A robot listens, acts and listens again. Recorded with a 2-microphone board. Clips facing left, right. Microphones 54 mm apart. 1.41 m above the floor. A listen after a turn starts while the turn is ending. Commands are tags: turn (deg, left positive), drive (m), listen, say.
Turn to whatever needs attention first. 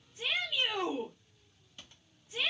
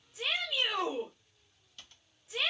<turn deg="-90"/>
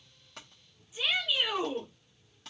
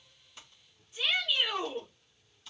<say>Found it: a shout, straight ahead.</say>